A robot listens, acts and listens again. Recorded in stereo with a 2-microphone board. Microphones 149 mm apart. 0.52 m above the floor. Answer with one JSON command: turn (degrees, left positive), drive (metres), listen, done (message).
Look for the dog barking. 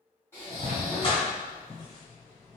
{"turn": 40}
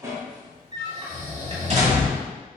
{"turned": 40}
{"turn": -55}
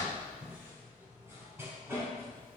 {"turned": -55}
{"turn": -15}
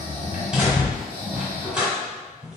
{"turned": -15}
{"done": "Found it: a dog barking, straight ahead, 1 to 2 m away."}